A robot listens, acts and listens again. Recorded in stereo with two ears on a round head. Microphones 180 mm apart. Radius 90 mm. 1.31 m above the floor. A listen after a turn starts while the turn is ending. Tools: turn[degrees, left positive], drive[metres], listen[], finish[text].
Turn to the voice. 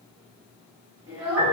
Thought: The child speaking: about 20° right or 160° right.
Action: turn[-20]
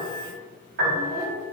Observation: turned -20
Thought: So it is at 15° left.
Action: turn[15]
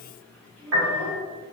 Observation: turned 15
Thought: The child speaking is now 10° left.
Action: turn[10]
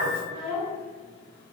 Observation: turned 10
Thought: The child speaking is now 10° left.
Action: turn[10]
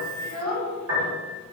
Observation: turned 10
Thought: The child speaking is now 10° left.
Action: turn[10]
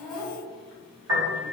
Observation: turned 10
Action: finish[Found it: a child speaking, straight ahead, 2 to 4 m away.]